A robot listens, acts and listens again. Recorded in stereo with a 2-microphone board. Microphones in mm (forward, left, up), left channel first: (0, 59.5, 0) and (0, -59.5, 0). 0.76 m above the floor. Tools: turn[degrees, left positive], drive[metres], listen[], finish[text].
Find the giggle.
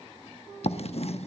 Action: listen[]
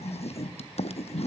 Action: listen[]
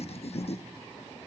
Action: finish[I can't make out a giggle, only writing.]